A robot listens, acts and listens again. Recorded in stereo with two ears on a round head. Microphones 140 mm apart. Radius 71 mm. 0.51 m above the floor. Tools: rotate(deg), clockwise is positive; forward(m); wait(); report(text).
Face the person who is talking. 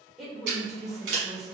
rotate(-30)
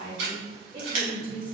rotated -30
rotate(30)
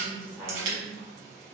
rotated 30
rotate(15)
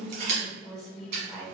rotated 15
report("Facing the woman speaking, 1 to 2 m away.")